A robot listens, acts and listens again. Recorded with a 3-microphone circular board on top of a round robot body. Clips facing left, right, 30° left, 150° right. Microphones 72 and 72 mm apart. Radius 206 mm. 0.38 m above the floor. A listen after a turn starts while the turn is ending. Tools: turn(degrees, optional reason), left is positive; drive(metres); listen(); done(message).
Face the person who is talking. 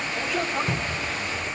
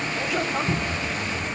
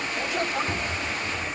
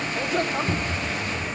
turn(degrees=180, reason="The man speaking: straight behind.")
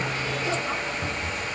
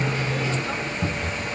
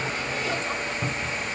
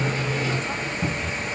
listen()
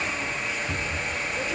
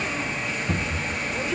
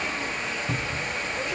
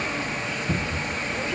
listen()
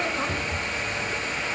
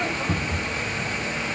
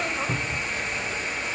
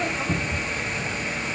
turn(degrees=60, reason="The man speaking is now 60° left.")
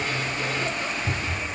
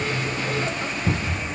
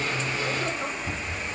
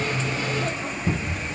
listen()
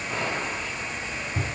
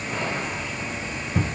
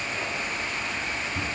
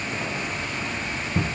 listen()
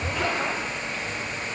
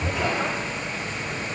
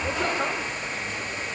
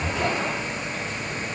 done("Facing where the man speaking came from. I can't hear it now.")